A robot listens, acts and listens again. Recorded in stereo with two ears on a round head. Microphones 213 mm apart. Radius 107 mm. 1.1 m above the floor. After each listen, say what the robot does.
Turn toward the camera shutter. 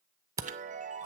Turn 30° right.
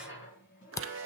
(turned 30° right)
Turn 15° left.
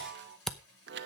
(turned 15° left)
Found it: a camera shutter, straight ahead.